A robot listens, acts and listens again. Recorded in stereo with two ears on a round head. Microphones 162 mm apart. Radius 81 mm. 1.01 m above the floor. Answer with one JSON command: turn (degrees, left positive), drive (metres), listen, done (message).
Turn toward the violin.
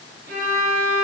{"turn": -50}
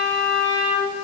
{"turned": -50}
{"turn": -75}
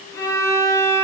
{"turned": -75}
{"turn": 20}
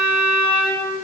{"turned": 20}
{"done": "Found it: a violin, straight ahead, 2 to 4 m away."}